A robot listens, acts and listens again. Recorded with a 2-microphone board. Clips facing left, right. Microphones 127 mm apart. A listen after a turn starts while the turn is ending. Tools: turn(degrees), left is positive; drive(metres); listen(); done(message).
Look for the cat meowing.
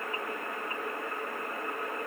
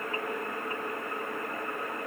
listen()
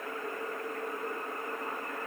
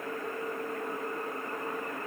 listen()
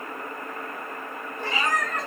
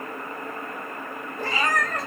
turn(degrees=-45)
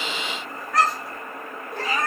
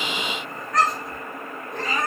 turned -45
done("Found it: a cat meowing, straight ahead.")